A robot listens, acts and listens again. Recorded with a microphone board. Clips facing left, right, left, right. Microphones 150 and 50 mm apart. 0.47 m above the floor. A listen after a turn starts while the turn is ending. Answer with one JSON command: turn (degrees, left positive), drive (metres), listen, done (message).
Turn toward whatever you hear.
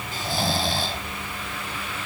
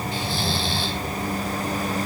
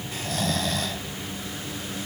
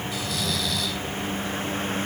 {"turn": 45}
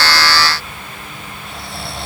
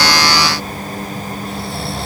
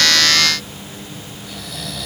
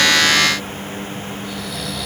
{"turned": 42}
{"done": "Found it: snoring, straight ahead, 1 to 2 m away."}